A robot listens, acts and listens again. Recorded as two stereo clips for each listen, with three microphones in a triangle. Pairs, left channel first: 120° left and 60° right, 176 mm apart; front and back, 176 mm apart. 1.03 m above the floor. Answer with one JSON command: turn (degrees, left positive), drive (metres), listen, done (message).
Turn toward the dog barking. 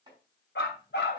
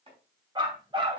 {"turn": 120}
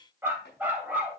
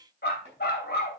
{"turn": 20}
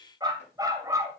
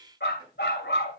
{"turn": 10}
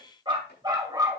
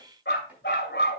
{"turn": 10}
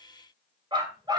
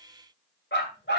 {"done": "Facing the dog barking, 2 to 4 m away."}